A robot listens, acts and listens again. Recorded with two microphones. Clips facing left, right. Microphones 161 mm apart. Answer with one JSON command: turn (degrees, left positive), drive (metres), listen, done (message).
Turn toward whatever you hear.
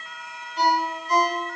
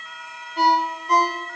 {"turn": -60}
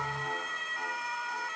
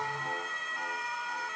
{"listen": true}
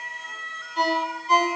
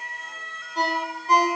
{"turn": -45}
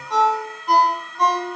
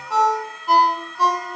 {"done": "Found it: a ringtone, straight ahead."}